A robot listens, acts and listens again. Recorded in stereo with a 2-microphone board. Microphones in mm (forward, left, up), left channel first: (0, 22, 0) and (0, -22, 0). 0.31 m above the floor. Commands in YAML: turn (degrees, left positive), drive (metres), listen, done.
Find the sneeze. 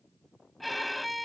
listen: true
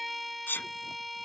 turn: 50
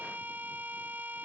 listen: true
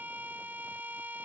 done: "I heard a sneeze, but can't make it out now. It was about straight ahead or 80° left."